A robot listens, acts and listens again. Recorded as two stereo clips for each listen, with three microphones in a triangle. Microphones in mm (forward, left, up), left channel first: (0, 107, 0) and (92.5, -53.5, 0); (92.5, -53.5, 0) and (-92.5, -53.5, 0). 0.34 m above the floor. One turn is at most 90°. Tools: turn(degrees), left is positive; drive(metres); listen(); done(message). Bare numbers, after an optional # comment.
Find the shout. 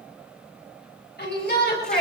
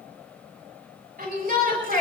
# The shout: 145° left.
turn(90)
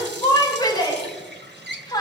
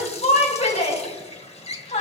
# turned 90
# The shout is now 55° left.
turn(55)
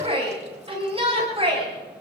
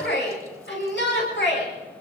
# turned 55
done("Found it: a shout, straight ahead.")